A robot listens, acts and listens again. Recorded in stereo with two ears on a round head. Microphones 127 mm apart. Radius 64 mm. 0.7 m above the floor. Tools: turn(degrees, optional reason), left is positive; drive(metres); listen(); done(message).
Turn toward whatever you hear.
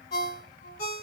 turn(degrees=50, reason="The ringtone: about 50° left or 130° left.")
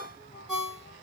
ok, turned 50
done("Facing the ringtone.")